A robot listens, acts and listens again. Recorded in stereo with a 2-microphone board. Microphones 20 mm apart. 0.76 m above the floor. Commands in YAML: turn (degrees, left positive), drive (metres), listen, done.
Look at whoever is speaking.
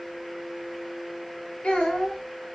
turn: 90
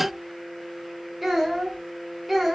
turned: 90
done: "Facing the child speaking, 1 to 2 m away."